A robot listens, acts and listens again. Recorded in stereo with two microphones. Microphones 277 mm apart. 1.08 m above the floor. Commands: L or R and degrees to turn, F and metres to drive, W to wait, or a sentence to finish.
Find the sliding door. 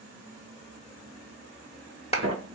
R55
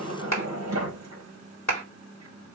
R70
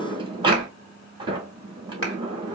R20
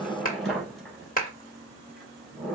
Found it: a sliding door, straight ahead.